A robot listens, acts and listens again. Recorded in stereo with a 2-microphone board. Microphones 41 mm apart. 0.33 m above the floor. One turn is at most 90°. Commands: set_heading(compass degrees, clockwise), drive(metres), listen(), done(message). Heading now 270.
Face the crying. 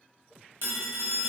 listen()
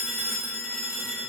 listen()
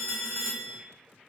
done("I can't make out crying, only a phone ringing.")